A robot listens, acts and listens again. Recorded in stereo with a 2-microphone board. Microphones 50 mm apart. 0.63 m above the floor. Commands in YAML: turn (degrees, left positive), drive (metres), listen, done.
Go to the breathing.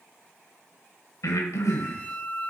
turn: 90
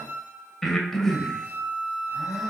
drive: 1.0
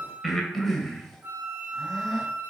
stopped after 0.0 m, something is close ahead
done: "Something is in my way. I am facing the breathing but have not reached it."